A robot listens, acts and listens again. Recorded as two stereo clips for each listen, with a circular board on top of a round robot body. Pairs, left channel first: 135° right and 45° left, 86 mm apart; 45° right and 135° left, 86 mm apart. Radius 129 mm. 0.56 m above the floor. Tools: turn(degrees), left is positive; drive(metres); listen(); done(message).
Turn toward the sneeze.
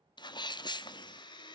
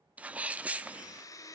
turn(degrees=-155)
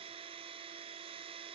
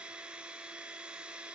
done("I heard a sneeze from this way, but can't make it out now.")